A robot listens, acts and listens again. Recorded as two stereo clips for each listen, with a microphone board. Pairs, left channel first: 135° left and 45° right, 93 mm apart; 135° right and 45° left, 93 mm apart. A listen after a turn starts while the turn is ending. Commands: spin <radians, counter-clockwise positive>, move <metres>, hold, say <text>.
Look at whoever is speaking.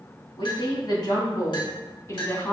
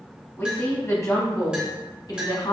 spin -2.88
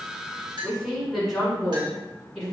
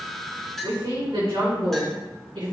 spin 0.87
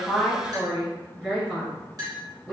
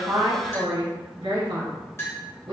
spin 0.44
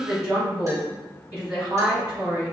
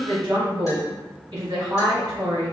spin 0.26
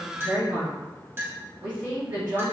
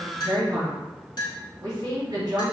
say Found it: a woman speaking, straight ahead.